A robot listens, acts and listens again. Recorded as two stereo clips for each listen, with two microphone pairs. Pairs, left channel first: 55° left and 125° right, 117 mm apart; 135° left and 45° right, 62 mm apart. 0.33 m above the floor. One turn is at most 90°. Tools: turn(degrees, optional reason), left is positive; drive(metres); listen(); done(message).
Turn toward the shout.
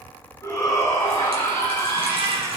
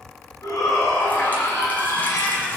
turn(degrees=90, reason="The shout: 115° left.")
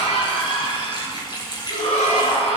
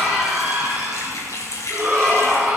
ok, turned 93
turn(degrees=25, reason="The shout is now 25° left.")
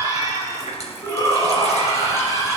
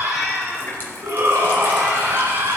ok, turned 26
done("Found it: a shout, straight ahead.")